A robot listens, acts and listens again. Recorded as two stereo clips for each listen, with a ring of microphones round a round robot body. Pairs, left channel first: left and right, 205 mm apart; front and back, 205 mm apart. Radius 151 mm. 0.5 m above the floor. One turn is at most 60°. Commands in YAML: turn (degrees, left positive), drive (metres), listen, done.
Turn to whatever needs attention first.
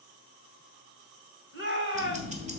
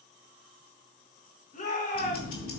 turn: -60
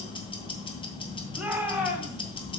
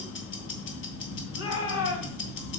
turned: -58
done: "Found it: a shout, straight ahead."